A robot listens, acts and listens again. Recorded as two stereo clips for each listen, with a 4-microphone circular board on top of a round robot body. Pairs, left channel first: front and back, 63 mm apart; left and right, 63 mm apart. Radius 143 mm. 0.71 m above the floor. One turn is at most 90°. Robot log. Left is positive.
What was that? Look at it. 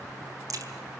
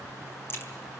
note: The crack: 145° left.
cmd yaw +90
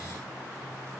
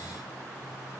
note: Nothing new. It was at 55° left.
cmd yaw +55
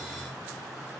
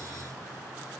end: I heard a crack from this way, but can't make it out now.